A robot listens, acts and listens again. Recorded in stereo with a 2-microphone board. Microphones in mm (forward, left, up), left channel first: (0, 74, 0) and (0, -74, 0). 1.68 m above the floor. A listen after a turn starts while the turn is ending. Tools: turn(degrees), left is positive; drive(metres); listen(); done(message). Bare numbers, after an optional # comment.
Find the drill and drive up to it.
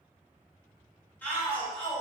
listen()
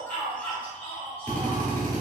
turn(30)
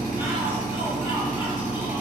# So it is at 15° right.
turn(-15)
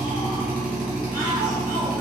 drive(1.0)
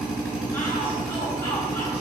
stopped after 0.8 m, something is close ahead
done("Arrived at the drill, straight ahead.")